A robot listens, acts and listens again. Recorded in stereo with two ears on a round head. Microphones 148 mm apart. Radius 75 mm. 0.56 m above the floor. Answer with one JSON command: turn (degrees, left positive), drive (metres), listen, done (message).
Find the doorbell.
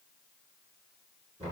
{"listen": true}
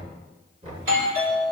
{"turn": -55}
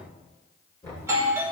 {"turn": -20}
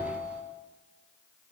{"turn": -10}
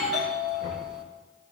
{"done": "Found it: a doorbell, straight ahead."}